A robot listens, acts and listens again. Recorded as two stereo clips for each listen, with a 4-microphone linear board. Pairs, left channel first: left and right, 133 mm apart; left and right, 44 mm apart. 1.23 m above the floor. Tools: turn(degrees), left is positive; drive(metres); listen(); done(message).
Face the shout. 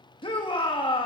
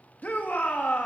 turn(degrees=40)
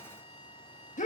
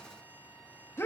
turn(degrees=95)
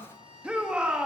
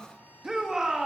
turn(degrees=-10)
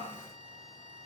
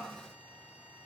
listen()
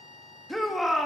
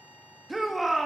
done("Facing the shout, 1 to 2 m away.")